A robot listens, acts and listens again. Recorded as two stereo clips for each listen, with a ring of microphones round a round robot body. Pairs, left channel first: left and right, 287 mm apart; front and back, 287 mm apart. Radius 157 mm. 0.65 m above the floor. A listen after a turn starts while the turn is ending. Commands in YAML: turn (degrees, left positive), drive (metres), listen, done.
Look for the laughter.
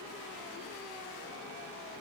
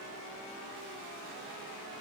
listen: true
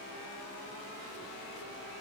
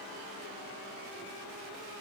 listen: true
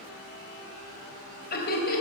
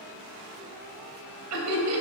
turn: 145
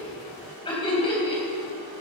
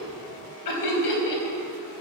turn: 15
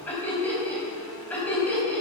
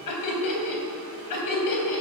done: "Found it: laughter, straight ahead."